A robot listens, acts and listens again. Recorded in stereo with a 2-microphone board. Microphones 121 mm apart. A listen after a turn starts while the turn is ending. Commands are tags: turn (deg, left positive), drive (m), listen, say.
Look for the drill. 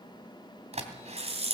<turn deg="-60"/>
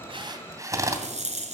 <turn deg="-30"/>
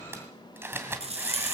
<turn deg="-20"/>
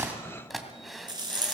<say>Facing the drill.</say>